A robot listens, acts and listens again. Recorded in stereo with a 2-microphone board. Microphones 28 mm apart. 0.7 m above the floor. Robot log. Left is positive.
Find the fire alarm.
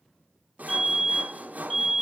cmd yaw +30
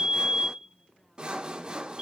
note: So it is at 20° right.
cmd yaw -20
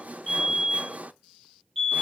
end: Found it: a fire alarm, straight ahead.